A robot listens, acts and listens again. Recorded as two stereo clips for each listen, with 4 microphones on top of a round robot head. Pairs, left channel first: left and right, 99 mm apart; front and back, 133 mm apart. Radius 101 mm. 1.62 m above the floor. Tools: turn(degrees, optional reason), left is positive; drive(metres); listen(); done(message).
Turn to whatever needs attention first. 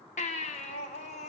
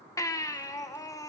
turn(degrees=65, reason="The baby crying: 65° left.")
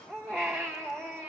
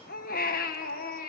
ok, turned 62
done("Facing the baby crying, 1 to 2 m away.")